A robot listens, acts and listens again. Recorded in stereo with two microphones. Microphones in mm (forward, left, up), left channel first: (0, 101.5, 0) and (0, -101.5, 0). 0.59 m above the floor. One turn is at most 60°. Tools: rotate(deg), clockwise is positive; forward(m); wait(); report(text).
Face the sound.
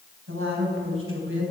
rotate(60)
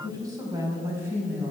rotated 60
rotate(10)
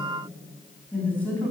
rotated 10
rotate(-10)
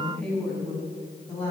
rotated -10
rotate(-10)
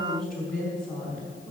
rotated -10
report("Found it: a woman speaking, straight ahead.")